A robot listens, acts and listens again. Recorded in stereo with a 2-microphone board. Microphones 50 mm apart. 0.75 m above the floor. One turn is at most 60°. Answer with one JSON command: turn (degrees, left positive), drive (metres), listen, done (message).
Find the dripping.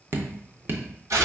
{"turn": -45}
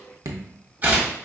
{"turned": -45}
{"turn": -60}
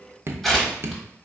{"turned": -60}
{"turn": -50}
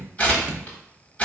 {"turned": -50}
{"turn": -25}
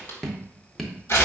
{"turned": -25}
{"done": "Found it: dripping, straight ahead."}